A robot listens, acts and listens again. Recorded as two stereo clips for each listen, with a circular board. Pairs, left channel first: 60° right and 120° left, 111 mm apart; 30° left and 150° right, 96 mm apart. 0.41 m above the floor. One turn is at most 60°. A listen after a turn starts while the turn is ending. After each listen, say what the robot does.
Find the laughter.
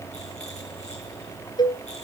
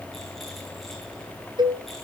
Keep listening.
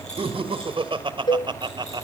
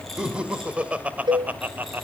Turn 60° left.
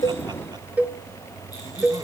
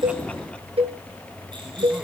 Turn 60° left.
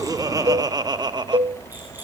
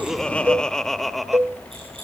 Turn 60° left.
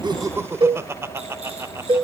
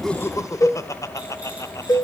Turn 60° left.
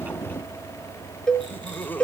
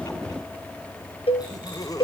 Facing the laughter.